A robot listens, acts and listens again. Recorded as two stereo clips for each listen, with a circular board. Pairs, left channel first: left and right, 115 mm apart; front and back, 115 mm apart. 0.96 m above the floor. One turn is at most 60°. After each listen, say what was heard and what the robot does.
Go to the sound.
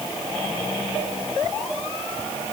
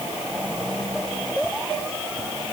Keep listening.
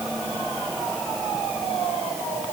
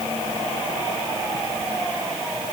Keep listening.
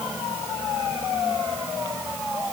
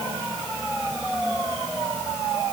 I can't make out anything to turn to.